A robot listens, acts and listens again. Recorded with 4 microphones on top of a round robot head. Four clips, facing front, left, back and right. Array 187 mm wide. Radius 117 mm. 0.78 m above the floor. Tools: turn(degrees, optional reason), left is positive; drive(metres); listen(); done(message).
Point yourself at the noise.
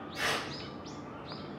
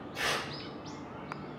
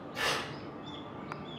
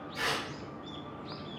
turn(degrees=160, reason="The tearing paper: 160° left.")
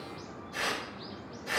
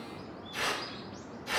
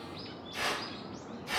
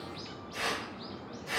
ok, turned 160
turn(degrees=25, reason="The tearing paper is now 25° left.")
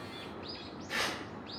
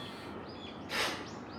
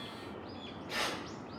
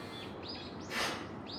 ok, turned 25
turn(degrees=10, reason="The tearing paper is now 10° left.")
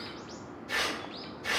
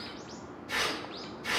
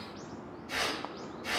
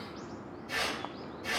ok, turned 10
done("Found it: tearing paper, straight ahead.")